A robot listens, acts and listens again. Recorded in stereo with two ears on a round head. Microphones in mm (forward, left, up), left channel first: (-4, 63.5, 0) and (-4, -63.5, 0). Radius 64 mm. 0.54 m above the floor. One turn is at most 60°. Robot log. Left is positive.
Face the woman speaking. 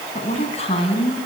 note: The woman speaking: about 40° left or 140° left.
cmd yaw +40
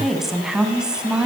end: Facing the woman speaking.